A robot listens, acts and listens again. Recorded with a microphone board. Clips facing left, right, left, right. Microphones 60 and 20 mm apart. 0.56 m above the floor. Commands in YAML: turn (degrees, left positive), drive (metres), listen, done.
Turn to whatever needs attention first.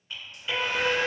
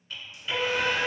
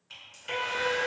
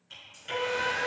turn: 60
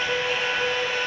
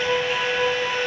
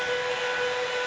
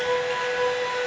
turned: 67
turn: 25
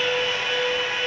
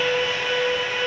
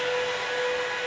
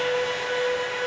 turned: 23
done: "Facing the alarm, 1 to 2 m away."